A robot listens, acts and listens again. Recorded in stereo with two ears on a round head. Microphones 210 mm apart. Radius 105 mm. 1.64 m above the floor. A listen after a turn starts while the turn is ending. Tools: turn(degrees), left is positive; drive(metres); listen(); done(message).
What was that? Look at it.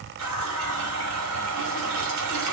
turn(degrees=-90)
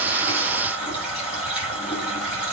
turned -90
done("Facing the running tap.")